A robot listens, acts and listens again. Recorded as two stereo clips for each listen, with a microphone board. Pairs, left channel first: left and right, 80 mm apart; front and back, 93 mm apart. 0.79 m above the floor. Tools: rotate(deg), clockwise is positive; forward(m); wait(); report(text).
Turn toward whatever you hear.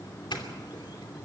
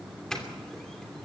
rotate(-85)
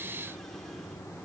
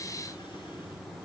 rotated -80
wait()
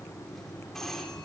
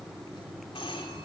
report("Found it: a doorbell, straight ahead.")